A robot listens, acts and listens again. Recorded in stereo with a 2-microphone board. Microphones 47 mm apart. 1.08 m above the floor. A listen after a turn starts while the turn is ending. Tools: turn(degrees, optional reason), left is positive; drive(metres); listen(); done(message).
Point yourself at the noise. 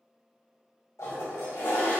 turn(degrees=90)
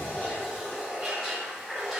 done("Found it: a toilet flushing, straight ahead.")